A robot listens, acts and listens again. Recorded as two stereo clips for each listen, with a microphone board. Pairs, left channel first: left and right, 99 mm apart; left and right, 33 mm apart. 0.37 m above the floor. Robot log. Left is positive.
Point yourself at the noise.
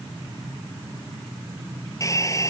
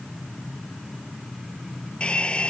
note: The hair dryer: about 30° left or 150° left.
cmd yaw +30
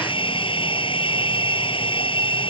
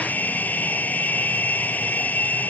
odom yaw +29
note: So it is at 120° left.
cmd yaw +120
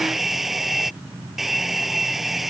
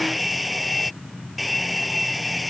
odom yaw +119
end: Facing the hair dryer.